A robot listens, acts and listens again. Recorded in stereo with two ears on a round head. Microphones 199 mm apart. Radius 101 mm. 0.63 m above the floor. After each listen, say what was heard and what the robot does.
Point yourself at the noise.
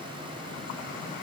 Keep listening.
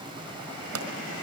The pop: about 70° right or 110° right. Turn 70° right.
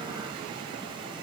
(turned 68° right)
Keep listening.
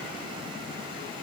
I heard a pop, but can't make it out now. It was about 5° right or 40° right.